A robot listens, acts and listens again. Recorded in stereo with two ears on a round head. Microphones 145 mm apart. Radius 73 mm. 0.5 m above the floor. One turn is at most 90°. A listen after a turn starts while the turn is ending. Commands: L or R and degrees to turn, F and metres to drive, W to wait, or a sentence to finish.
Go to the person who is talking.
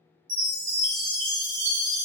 W
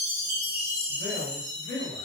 L55
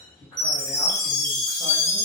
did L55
W
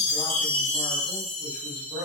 F1.0
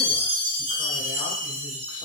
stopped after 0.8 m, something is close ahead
W
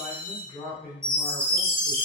L10
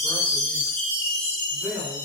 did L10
I am next to the man speaking.